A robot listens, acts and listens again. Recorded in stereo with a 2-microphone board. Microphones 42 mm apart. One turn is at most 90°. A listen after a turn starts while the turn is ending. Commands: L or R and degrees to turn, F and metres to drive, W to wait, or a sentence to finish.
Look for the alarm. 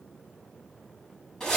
W
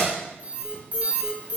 R35
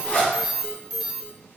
Facing the alarm, 2 to 4 m away.